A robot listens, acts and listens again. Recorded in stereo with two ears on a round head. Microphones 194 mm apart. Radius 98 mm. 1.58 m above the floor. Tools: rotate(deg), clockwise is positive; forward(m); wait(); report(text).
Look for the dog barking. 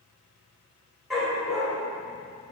rotate(-30)
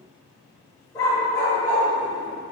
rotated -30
rotate(-170)
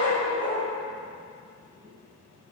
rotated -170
rotate(-30)
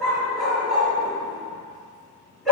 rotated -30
report("Facing the dog barking.")